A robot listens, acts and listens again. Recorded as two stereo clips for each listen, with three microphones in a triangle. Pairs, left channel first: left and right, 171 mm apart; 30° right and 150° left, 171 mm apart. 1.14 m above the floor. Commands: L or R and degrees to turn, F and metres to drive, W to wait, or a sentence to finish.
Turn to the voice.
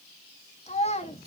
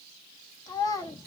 L35
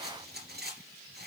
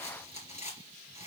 W
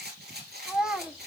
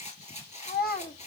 Found it: a child speaking, straight ahead.